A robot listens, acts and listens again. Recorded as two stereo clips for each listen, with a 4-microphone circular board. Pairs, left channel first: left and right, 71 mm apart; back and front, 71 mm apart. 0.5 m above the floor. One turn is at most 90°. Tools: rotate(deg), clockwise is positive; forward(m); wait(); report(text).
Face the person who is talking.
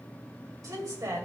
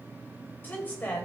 rotate(90)
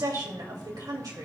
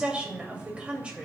rotate(70)
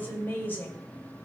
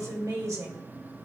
rotate(-30)
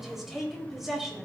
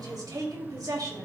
report("Found it: a woman speaking, straight ahead.")